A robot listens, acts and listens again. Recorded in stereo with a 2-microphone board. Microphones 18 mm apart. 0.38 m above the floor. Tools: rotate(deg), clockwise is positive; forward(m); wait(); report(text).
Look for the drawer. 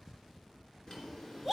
rotate(-35)
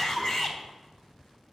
wait()
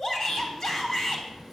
report("Facing the drawer, 2 to 4 m away.")